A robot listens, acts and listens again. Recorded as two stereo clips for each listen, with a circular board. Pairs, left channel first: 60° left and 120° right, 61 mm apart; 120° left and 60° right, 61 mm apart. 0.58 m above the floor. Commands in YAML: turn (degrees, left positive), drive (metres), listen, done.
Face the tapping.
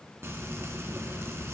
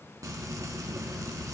listen: true
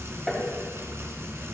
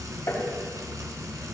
turn: 145
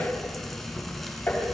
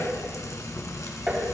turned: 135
turn: 10
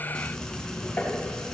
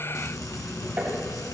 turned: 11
done: "Facing the tapping, 2 to 4 m away."